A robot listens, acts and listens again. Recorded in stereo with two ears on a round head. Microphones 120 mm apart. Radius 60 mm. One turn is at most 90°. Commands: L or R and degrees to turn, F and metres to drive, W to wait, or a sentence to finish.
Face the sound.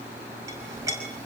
R25
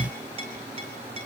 R90
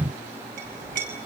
R70
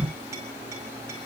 W
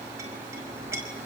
R20
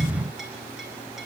W
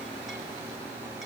W
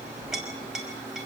Found it: a clink, straight ahead.